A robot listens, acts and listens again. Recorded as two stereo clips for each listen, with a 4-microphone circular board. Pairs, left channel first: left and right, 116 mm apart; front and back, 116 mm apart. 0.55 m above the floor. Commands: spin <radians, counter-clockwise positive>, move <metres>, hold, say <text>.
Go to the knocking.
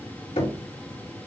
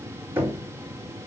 spin 1.92
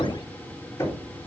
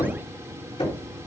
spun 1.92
spin 0.44
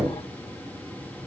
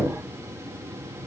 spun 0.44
spin -0.17
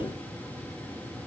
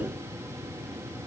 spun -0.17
hold
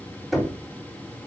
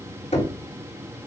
move 1.0
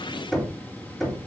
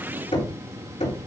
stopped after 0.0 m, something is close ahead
say Blocked. The knocking is further on, straight ahead.